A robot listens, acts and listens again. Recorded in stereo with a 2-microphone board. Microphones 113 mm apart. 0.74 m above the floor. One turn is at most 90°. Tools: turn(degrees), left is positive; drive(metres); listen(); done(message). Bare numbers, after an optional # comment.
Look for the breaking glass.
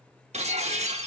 turn(-90)
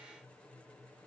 done("Facing where the breaking glass came from. I can't hear it now.")